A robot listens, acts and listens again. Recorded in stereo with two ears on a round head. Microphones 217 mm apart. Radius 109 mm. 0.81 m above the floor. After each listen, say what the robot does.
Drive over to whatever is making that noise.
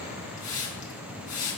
Turn 35° left.
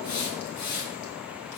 Turn 110° left.
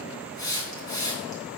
Turn 15° left.
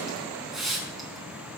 Drive 1.0 m forward.
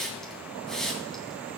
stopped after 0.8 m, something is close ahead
Blocked. The hiss is further on, straight ahead.